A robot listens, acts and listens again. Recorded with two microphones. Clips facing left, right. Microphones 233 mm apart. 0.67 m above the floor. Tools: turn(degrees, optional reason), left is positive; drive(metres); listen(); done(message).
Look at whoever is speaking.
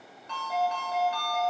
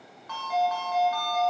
listen()
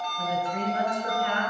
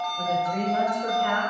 turn(degrees=-60, reason="The woman speaking: about 60° right or 120° right.")
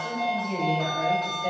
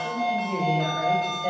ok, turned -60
turn(degrees=-10, reason="So it is at 10° right.")
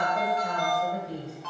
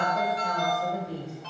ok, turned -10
done("Facing the woman speaking.")